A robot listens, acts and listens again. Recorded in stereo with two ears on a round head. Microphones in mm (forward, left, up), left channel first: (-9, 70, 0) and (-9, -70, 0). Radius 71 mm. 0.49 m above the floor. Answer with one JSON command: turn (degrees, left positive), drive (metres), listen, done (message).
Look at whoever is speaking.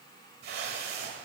{"listen": true}
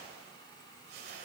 {"listen": true}
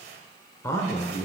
{"turn": 20}
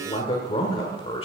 {"turn": 135}
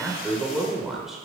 {"done": "Found it: a man speaking, straight ahead."}